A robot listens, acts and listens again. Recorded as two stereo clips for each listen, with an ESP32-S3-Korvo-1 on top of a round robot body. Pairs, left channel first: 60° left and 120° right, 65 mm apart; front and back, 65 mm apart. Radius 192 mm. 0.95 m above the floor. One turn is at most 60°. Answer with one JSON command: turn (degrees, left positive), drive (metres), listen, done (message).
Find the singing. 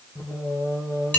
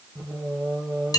{"turn": 60}
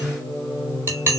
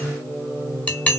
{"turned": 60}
{"turn": 60}
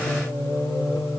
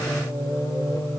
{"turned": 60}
{"turn": 35}
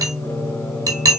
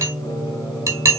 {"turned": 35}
{"turn": 10}
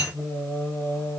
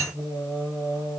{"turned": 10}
{"turn": 10}
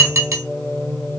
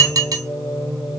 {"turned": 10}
{"done": "Found it: singing, straight ahead, 2 to 4 m away."}